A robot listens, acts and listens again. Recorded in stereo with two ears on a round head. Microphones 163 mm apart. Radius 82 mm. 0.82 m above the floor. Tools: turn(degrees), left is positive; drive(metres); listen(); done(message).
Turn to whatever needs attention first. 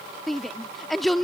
turn(degrees=30)
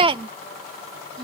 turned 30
turn(degrees=-30)
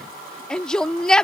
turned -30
done("Found it: a shout, straight ahead.")